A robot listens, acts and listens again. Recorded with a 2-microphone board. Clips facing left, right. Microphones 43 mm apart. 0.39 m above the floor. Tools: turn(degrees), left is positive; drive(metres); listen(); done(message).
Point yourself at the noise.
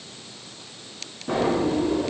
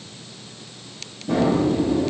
turn(degrees=40)
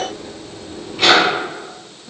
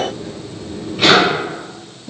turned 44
done("Facing the drawer, 1 to 2 m away.")